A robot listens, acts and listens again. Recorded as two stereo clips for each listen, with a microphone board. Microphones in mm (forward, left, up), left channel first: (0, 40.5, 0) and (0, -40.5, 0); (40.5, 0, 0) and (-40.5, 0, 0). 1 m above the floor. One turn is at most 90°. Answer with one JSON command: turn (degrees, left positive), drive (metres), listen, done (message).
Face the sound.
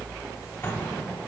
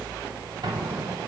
{"turn": 90}
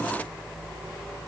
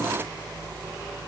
{"turn": 65}
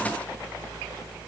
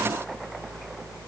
{"done": "I heard an explosion from this way, but can't make it out now."}